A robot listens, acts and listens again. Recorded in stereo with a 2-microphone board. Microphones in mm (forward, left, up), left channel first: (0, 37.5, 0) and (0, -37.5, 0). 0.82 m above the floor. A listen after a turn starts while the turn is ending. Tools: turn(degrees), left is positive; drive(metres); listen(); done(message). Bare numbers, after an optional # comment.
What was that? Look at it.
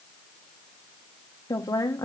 # The woman speaking: about 55° left or 125° left.
turn(55)
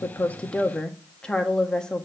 # So it is at 15° left.
turn(15)
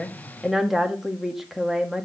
done("Facing the woman speaking, 1 to 2 m away.")